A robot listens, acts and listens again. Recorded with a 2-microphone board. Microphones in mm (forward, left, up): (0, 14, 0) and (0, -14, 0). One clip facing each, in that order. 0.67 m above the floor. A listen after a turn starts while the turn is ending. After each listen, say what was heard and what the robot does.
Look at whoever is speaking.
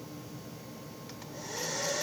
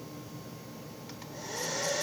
Keep listening.
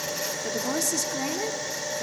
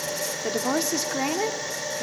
The woman speaking: about 35° right or 145° right. Turn 35° right.
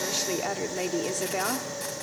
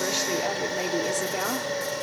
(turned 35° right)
Found it: a woman speaking, straight ahead, 1 to 2 m away.